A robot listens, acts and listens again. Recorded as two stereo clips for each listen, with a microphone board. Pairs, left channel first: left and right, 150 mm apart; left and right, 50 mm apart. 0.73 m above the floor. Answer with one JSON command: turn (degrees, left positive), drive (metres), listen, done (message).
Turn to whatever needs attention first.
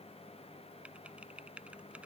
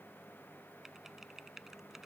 {"listen": true}
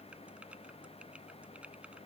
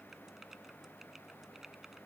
{"listen": true}
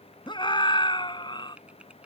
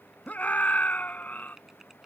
{"turn": 30}
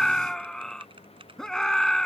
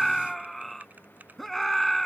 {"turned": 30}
{"done": "Found it: a scream, straight ahead."}